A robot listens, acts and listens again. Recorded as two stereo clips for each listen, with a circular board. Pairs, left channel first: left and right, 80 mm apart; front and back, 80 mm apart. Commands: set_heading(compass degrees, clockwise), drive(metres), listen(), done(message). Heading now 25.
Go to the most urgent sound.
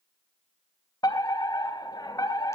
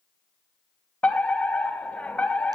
set_heading(315)
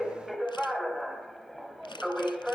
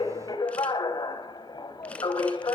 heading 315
drive(1.0)
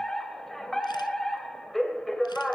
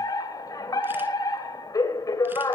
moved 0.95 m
drive(1.0)
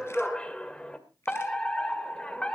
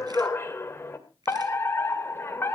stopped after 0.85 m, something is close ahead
set_heading(295)
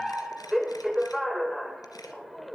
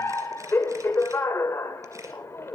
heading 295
done("I am next to the fire alarm.")